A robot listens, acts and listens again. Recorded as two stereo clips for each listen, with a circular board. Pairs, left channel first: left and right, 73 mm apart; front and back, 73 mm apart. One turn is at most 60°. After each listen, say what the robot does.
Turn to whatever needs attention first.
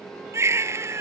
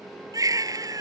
Turn 60° right.
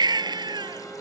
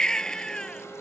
Turn 60° right.
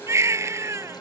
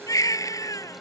Turn 40° right.
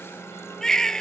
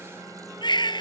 Facing the baby crying.